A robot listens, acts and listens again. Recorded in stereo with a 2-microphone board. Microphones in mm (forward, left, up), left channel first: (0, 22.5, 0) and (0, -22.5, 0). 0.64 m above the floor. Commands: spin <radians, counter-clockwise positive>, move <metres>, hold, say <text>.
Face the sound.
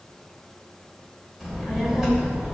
spin -0.35
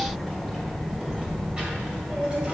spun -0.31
spin -0.52
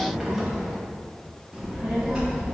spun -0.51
spin -0.52
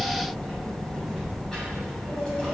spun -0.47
spin 0.26
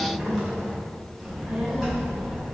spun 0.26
say Facing the child speaking, 2 to 4 m away.